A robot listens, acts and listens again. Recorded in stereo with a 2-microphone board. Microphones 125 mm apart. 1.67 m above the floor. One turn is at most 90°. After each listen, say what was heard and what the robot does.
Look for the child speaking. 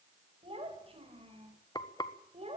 The child speaking: about 50° right or 130° right. Turn 50° right.
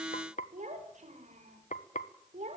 So it is at 60° right. Turn 60° right.
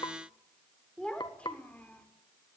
The child speaking is now 10° left. Turn 10° left.
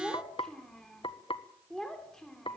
Facing the child speaking, 2 to 4 m away.